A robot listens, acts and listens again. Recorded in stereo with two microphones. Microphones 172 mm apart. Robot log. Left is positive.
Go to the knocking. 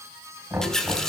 cmd yaw -30
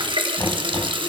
cmd idle
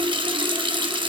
cmd idle
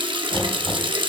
end: I heard knocking, but can't make it out now. It was about 15° left or 135° right. I did not reach it.